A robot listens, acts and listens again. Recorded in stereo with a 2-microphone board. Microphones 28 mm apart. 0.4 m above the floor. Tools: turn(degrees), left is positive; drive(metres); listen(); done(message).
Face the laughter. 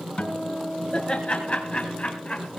turn(degrees=50)
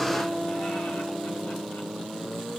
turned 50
listen()
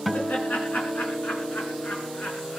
turn(degrees=75)
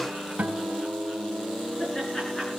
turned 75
turn(degrees=15)
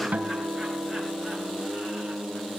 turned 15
listen()
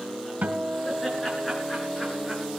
listen()
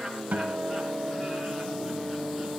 done("Facing where the laughter came from. I can't hear it now.")